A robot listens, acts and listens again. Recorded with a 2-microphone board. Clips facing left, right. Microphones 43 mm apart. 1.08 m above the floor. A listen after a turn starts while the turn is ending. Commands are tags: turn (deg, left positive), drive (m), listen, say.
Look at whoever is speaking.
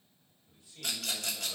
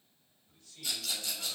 <turn deg="20"/>
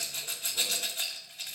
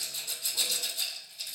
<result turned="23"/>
<listen/>
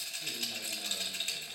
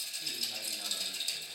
<listen/>
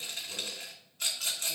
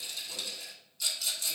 <say>I heard a man speaking, but can't make it out now. It was about 5° right or 140° left.</say>